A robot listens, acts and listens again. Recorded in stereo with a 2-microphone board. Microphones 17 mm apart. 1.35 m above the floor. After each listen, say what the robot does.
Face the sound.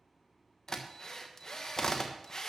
Turn 40° left.
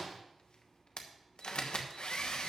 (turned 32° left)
Turn 105° left.
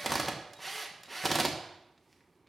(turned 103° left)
Found it: a drill, straight ahead, 1 to 2 m away.